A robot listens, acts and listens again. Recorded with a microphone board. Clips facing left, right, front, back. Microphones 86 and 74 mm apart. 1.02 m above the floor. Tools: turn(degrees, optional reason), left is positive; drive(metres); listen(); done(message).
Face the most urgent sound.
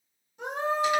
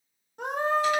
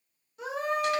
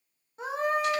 turn(degrees=-125, reason="The scream: 125° right.")
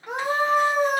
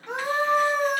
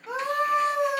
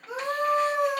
turn(degrees=10, reason="The scream is now 10° left.")
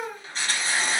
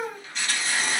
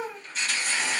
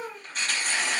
done("Found it: a scream, straight ahead, under 1 m away.")